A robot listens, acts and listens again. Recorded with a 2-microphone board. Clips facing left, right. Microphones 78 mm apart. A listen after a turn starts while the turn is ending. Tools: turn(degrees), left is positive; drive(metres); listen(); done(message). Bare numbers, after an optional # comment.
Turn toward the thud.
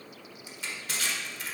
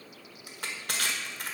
listen()
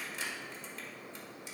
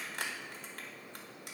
listen()
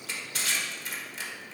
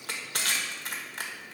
done("I can't make out a thud to turn to.")